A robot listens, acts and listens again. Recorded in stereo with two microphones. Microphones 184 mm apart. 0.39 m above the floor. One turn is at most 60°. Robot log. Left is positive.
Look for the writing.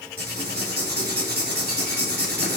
note: The writing: about 55° right or 125° right.
cmd yaw -55
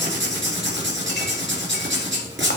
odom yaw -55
note: So it is at 75° right.
cmd yaw -60
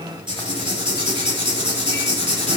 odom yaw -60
note: The writing is now 25° right.
cmd yaw -25
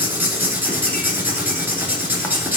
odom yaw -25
note: The writing is now 10° right.
cmd yaw -10
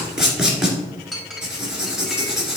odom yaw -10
end: Facing the writing.